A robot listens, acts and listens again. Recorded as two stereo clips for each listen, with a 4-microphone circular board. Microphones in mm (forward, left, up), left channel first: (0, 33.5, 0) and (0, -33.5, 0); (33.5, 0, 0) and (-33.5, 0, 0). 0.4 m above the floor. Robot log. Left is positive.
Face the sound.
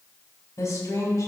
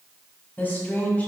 note: The woman speaking: 65° left.
cmd yaw +65
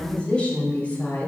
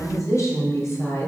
note: The woman speaking is now 30° left.
cmd yaw +30
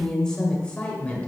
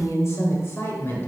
note: The woman speaking is now 35° left.
cmd yaw +35
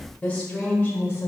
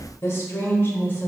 note: The woman speaking is now 40° left.
cmd yaw +40
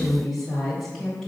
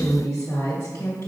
end: Found it: a woman speaking, straight ahead.